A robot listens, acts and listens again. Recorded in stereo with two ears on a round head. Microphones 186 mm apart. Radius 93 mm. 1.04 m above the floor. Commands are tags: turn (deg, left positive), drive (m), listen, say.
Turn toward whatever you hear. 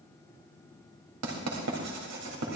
<turn deg="-90"/>
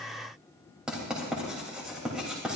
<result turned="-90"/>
<say>Found it: writing, straight ahead, 2 to 4 m away.</say>